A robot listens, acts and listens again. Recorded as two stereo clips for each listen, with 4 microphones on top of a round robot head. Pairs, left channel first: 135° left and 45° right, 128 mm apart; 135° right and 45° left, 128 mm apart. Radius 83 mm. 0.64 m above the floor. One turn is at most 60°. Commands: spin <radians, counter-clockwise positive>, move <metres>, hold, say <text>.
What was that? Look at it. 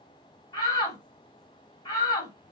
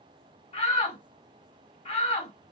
spin -1.05
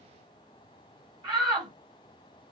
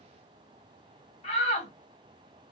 spin -1.05
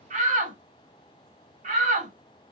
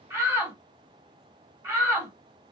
spin -0.52
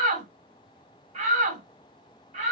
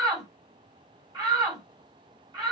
spin -0.26
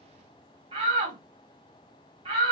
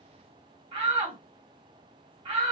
say Found it: a shout, straight ahead, 2 to 4 m away.